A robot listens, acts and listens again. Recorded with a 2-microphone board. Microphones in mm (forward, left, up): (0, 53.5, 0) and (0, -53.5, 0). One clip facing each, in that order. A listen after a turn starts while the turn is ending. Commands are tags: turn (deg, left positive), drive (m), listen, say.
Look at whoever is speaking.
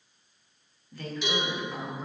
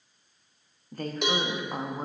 <turn deg="-45"/>
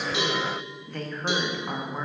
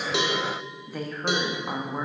<turn deg="-10"/>
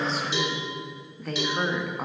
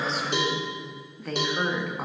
<say>Found it: a woman speaking, straight ahead.</say>